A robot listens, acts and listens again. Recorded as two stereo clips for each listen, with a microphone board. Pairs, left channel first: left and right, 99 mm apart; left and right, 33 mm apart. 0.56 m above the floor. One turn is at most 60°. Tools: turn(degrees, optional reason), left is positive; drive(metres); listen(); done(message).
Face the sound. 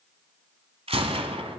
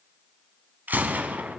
turn(degrees=-60)
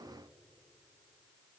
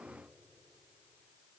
turn(degrees=-30, reason="Nothing new. It was at 30° right.")
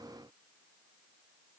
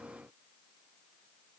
done("Facing where the gunshot came from. I can't hear it now.")